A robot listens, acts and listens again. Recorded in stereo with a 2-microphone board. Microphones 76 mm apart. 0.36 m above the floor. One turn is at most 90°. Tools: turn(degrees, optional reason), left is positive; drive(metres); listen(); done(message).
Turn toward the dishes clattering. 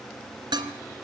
turn(degrees=-75, reason="The dishes clattering: about 75° right or 105° right.")
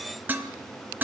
turn(degrees=-25, reason="So it is at 25° right.")
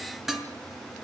done("Found it: dishes clattering, straight ahead, 2 to 4 m away.")